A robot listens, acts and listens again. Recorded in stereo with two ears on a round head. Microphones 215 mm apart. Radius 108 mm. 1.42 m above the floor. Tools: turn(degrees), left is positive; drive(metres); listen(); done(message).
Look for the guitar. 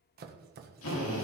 listen()
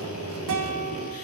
turn(degrees=-90)
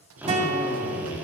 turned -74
turn(degrees=-30)
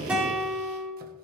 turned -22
done("Facing the guitar, 2 to 4 m away.")